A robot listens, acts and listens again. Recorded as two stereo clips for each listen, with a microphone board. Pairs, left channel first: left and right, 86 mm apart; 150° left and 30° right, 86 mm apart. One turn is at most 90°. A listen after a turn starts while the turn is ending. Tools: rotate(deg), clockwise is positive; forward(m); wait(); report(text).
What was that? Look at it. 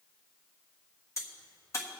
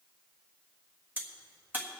rotate(-35)
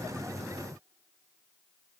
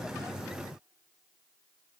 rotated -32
report("I heard a crack from this way, but can't make it out now.")